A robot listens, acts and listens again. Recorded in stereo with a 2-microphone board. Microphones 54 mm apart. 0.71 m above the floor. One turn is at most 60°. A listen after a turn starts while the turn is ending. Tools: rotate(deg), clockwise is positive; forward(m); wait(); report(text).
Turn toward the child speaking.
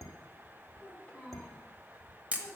rotate(-15)
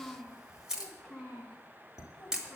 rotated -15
rotate(-30)
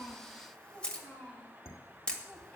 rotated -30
rotate(-25)
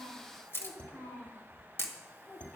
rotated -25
rotate(-60)
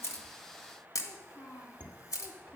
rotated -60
rotate(-60)
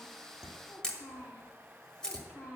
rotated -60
rotate(-15)
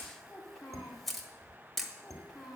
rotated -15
rotate(-10)
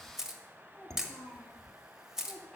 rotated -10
report("Facing the child speaking, 2 to 4 m away.")